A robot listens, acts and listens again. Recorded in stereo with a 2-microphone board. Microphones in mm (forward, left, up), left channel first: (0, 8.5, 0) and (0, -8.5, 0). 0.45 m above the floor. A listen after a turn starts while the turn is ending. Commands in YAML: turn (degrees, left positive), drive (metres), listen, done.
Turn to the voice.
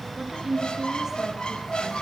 turn: -20
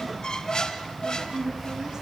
turn: -140
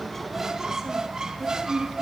turn: -35
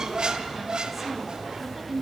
turn: -20
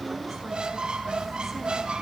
listen: true
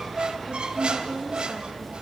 done: "Found it: a woman speaking, straight ahead, over 4 m away."